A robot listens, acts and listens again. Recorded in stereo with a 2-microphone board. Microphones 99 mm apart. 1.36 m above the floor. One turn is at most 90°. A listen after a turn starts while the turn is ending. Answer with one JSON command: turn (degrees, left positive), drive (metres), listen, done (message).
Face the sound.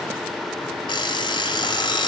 {"turn": 55}
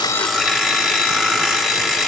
{"done": "Facing the alarm clock."}